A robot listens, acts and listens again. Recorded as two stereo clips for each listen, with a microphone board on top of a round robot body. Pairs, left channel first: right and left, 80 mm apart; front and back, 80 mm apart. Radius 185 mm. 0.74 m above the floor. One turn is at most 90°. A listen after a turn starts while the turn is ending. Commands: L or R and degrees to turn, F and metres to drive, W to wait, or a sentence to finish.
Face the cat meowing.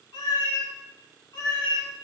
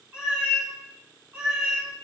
R90
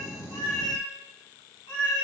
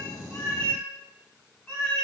R80
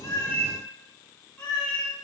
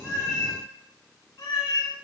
R20
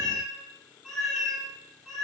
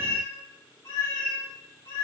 R10
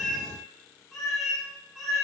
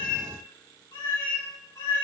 Found it: a cat meowing, straight ahead.